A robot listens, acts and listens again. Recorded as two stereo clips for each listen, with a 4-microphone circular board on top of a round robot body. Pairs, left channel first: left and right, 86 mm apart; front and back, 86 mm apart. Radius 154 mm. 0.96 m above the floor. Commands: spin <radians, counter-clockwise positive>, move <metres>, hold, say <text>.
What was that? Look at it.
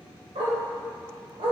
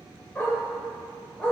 spin -1.40
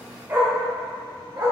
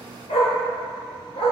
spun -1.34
spin -0.52
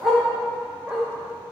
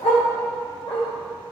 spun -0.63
spin -0.17
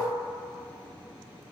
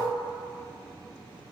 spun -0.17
hold
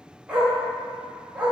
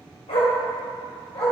spin -0.17
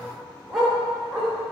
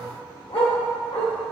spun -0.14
say Facing the dog barking, 1 to 2 m away.